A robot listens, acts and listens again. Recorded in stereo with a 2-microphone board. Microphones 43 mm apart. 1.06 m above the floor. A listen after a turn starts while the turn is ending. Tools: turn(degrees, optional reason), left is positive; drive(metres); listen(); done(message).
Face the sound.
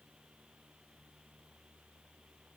listen()
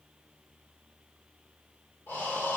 turn(degrees=55, reason="The breathing: about 55° left or 125° left.")
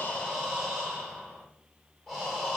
done("Found it: breathing, straight ahead, 1 to 2 m away.")